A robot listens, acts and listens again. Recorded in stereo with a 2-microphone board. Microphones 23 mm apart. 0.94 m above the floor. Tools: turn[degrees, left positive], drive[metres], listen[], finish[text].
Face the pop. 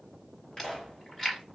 Thought: The pop: about 35° left or 145° left.
Action: turn[35]
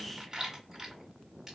Action: listen[]
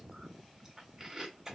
Action: finish[I heard a pop, but can't make it out now. It was about straight ahead or 110° left.]